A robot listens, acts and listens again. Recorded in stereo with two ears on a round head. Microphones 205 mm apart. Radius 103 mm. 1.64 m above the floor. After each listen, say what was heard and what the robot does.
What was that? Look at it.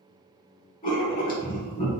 The writing: about 40° left or 140° left. Turn 40° left.
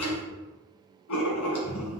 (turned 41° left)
So it is at 100° left. Turn 100° left.
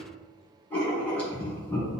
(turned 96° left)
Facing the writing, 1 to 2 m away.